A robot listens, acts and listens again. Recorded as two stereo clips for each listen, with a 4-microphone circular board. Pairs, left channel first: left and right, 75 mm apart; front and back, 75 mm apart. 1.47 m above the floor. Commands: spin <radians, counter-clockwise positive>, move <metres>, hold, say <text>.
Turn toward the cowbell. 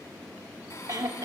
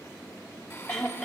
hold
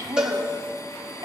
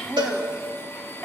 spin -2.97
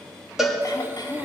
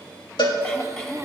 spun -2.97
say Facing the cowbell, 2 to 4 m away.